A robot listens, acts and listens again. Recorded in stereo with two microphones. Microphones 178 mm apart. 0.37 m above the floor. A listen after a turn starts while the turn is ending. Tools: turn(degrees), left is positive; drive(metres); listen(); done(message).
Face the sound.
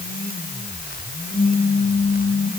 turn(degrees=35)
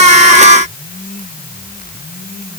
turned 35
listen()
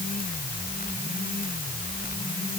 done("I heard a pop, but can't make it out now. It was about straight ahead or 110° left.")